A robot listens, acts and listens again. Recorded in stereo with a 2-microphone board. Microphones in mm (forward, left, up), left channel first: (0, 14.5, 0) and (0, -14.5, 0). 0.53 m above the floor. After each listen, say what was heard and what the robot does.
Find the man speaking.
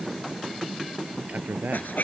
Turn 90° right.
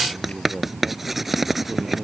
Facing the man speaking.